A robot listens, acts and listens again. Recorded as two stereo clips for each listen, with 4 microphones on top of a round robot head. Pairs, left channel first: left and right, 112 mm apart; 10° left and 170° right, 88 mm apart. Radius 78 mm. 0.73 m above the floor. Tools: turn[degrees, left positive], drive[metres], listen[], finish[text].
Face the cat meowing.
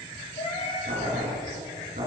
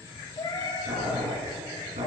Thought: The cat meowing: 50° left.
Action: turn[50]
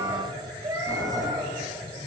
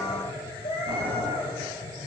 Thought: The cat meowing is now 30° right.
Action: turn[-30]
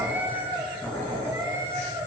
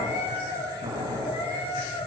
Thought: The cat meowing is now 25° right.
Action: turn[-25]
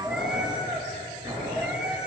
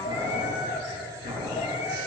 Thought: The cat meowing is now 10° right.
Action: turn[-10]
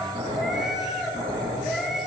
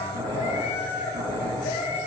Action: finish[Facing the cat meowing, 2 to 4 m away.]